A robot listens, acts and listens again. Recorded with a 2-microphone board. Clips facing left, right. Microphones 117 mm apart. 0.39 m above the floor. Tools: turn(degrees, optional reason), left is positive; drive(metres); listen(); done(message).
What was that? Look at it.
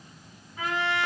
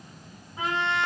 turn(degrees=-20, reason="The trumpet: about 20° right or 160° right.")
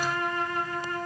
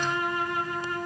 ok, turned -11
turn(degrees=-10, reason="So it is at 10° right.")
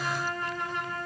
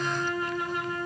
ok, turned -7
done("Facing the trumpet, 1 to 2 m away.")